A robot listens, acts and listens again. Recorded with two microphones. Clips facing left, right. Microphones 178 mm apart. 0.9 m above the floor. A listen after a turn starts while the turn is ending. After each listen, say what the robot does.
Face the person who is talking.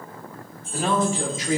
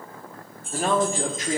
Turn 50° right.
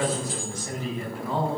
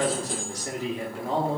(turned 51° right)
Turn 70° right.
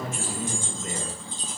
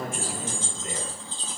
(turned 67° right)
Found it: a man speaking, straight ahead.